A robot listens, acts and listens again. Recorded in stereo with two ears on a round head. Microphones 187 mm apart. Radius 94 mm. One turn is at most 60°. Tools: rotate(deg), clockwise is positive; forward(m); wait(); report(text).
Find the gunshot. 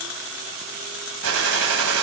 rotate(60)
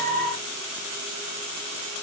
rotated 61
rotate(30)
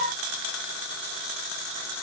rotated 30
report("I heard a gunshot from this way, but can't make it out now.")